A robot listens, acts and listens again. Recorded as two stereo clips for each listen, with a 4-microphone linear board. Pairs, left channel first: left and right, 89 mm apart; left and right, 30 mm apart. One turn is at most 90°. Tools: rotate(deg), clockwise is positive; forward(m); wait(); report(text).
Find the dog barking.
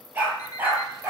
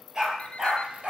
rotate(25)
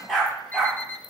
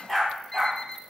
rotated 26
report("Found it: a dog barking, straight ahead.")